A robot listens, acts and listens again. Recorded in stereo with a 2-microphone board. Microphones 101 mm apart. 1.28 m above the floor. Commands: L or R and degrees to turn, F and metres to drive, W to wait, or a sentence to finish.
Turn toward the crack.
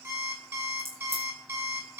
R65
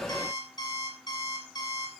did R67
W
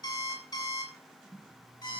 I heard a crack, but can't make it out now. It was about 5° left or 50° right.